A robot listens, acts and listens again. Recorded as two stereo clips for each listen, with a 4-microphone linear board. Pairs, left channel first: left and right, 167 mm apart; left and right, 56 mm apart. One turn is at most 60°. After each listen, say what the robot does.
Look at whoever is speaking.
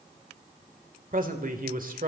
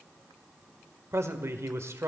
Turn 55° right.
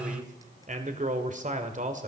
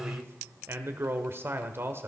Turn 55° right.
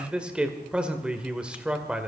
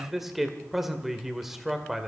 Facing the man speaking, 1 to 2 m away.